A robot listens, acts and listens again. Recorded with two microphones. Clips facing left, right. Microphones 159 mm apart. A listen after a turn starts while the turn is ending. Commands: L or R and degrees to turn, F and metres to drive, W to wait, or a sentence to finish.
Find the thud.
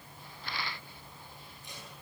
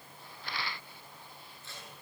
W
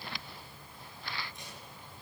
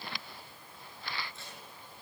W
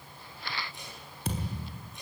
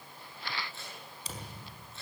L60
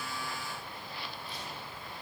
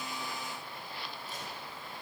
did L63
W
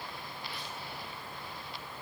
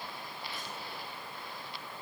I heard a thud, but can't make it out now. It was about 5° right or 55° left.